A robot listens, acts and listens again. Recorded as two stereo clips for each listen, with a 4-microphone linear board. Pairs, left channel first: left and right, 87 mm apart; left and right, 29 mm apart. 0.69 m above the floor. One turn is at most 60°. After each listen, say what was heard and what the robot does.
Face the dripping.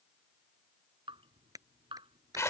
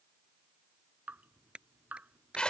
Turn 60° right.
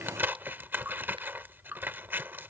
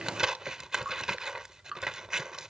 So it is at 20° right. Turn 20° right.
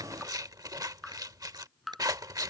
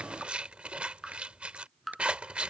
Found it: dripping, straight ahead.